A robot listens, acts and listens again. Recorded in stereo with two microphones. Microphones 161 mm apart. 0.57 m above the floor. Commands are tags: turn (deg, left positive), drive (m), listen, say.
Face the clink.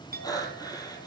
<turn deg="-60"/>
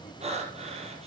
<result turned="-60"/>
<listen/>
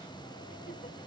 <listen/>
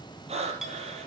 <say>Facing the clink.</say>